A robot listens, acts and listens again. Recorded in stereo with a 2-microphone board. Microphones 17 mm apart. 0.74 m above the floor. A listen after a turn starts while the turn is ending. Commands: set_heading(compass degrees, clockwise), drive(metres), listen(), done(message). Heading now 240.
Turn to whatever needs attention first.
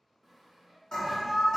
set_heading(175)
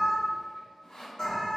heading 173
set_heading(123)
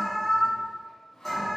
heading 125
done("Facing the alarm, 1 to 2 m away.")